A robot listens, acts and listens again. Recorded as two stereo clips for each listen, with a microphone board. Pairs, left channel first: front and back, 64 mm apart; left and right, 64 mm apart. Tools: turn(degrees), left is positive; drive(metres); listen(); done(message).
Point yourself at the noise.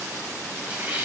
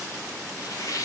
turn(degrees=115)
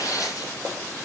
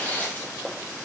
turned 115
turn(degrees=25)
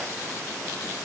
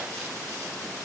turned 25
listen()
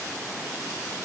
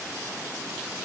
listen()
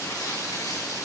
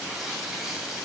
done("Facing where the tearing paper came from. I can't hear it now.")